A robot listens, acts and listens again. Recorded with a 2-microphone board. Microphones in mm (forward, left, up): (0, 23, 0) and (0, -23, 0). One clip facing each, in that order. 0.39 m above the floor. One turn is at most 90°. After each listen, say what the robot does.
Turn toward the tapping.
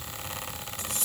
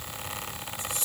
Keep listening.
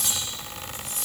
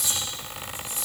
Keep listening.
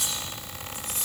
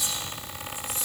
I can't make out tapping, only cutlery clinking.